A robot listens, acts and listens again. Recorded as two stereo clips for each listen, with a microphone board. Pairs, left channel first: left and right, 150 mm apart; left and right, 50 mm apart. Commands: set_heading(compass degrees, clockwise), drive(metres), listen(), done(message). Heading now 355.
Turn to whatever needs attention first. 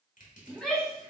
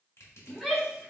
set_heading(325)
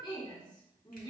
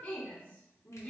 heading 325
set_heading(175)
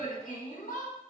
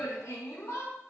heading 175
set_heading(110)
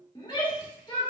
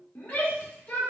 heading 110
set_heading(80)
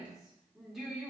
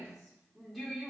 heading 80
done("Found it: a shout, straight ahead, 1 to 2 m away.")